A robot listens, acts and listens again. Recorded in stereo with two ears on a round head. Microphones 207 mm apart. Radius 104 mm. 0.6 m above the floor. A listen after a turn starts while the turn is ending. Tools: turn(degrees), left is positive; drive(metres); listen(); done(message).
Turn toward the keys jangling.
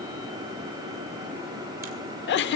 listen()
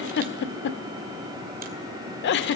listen()
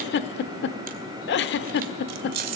turn(degrees=-75)
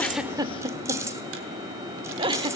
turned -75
listen()
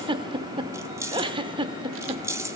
turn(degrees=-15)
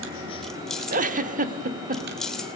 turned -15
done("Found it: keys jangling, straight ahead.")